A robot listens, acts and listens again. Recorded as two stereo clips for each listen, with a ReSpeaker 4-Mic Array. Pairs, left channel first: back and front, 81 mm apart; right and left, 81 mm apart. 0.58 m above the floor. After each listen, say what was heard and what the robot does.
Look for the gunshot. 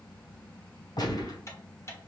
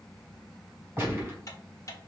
The gunshot: 155° left. Turn 155° left.
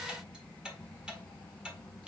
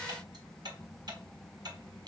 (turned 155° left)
I heard a gunshot from this way, but can't make it out now.